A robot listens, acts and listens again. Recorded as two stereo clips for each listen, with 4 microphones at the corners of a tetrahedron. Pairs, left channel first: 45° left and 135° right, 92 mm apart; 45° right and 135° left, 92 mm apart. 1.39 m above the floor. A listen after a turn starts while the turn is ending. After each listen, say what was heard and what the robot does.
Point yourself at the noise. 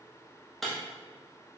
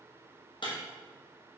The breaking glass: 40° right. Turn 40° right.
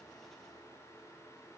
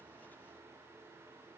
Facing where the breaking glass came from. I can't hear it now.